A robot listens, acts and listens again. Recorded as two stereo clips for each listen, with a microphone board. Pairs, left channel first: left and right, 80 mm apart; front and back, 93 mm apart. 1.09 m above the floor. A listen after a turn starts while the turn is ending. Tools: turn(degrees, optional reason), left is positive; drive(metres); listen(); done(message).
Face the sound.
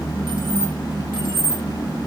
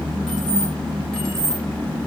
turn(degrees=-85, reason="The keys jangling: 85° right.")
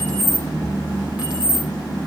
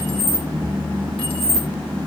turn(degrees=-15, reason="The keys jangling is now 15° right.")
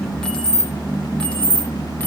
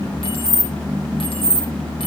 turn(degrees=15, reason="The keys jangling is now 15° left.")
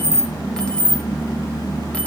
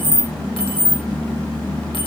turn(degrees=15, reason="The keys jangling is now 15° left.")
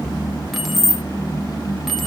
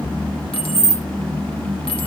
done("Facing the keys jangling, 1 to 2 m away.")